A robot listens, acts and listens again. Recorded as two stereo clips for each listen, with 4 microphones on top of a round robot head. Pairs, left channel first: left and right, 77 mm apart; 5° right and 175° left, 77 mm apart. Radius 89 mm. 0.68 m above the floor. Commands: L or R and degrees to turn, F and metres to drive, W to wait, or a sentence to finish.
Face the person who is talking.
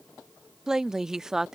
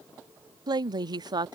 R170
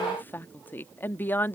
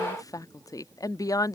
L30
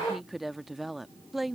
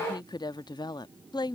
Found it: a woman speaking, straight ahead.